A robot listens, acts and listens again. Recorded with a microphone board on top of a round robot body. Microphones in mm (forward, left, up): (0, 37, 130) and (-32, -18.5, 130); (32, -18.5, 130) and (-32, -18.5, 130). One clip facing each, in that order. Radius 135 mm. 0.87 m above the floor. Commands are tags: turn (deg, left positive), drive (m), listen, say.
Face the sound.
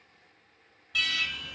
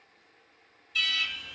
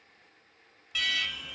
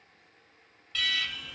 <turn deg="80"/>
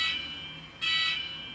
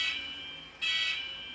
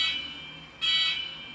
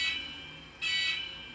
<turn deg="25"/>
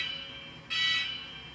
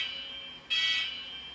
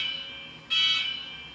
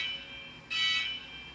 <say>Facing the alarm, 1 to 2 m away.</say>